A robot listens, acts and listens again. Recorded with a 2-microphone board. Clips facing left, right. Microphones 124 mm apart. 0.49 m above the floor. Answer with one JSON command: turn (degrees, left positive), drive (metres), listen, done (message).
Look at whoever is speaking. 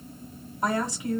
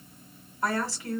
{"turn": 20}
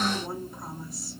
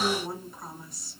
{"done": "Facing the woman speaking."}